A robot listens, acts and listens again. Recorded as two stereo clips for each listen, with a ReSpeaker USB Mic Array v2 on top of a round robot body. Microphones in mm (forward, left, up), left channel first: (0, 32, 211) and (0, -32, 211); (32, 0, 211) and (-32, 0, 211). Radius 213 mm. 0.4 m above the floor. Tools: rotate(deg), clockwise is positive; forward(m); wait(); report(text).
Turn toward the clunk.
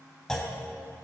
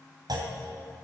rotate(-170)
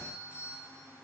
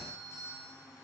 report("Facing where the clunk came from. I can't hear it now.")